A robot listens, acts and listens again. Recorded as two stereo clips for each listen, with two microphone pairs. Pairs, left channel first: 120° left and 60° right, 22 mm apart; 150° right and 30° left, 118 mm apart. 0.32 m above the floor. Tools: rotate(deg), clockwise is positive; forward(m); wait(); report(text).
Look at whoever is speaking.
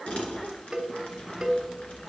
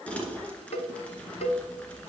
wait()
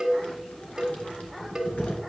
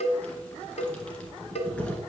wait()
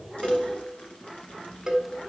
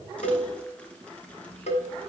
report("I can't make out anyone speaking to turn to.")